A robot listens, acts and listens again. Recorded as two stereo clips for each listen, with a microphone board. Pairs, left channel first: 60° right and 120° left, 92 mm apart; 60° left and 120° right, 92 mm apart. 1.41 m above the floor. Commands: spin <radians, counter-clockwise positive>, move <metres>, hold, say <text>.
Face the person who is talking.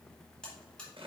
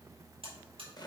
hold
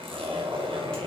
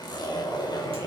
hold
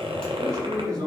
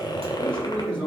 spin 3.05
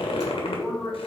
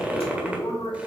spin 0.44
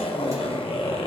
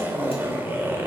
hold
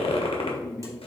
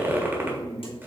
spin 0.35
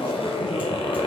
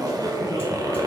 hold
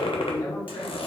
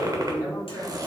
say Found it: a man speaking, straight ahead, 2 to 4 m away.